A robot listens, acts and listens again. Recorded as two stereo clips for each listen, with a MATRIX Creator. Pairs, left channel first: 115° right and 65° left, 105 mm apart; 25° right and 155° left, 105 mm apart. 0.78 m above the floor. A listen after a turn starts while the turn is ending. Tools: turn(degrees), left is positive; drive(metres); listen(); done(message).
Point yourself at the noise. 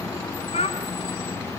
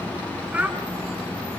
turn(degrees=-125)
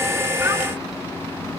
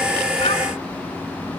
listen()
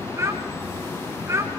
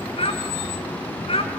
done("Facing the child speaking, over 4 m away.")